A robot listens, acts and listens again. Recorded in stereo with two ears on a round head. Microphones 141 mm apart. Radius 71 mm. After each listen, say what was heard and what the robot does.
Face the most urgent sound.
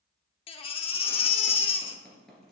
The baby crying: about 35° left or 145° left. Turn 35° left.
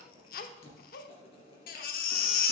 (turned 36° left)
So it is at 100° left. Turn 100° left.
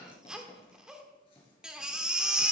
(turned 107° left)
Found it: a baby crying, straight ahead, under 1 m away.